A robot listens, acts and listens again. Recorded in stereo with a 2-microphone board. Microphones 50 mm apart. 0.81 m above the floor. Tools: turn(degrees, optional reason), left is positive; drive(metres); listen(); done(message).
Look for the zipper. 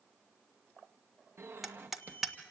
turn(degrees=-55, reason="The zipper: about 55° right or 125° right.")
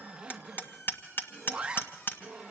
turn(degrees=-20, reason="So it is at 20° right.")
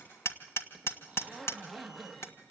done("Facing the zipper, 1 to 2 m away.")